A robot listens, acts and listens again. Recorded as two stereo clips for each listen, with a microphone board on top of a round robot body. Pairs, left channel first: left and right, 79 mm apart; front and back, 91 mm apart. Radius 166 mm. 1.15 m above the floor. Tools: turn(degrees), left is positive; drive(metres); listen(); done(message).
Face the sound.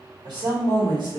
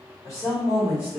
turn(degrees=-65)
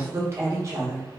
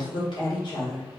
turn(degrees=-40)
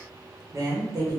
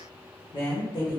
turn(degrees=-45)
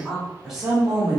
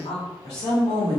turn(degrees=-15)
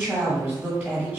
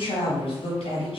done("Found it: a woman speaking, straight ahead, 1 to 2 m away.")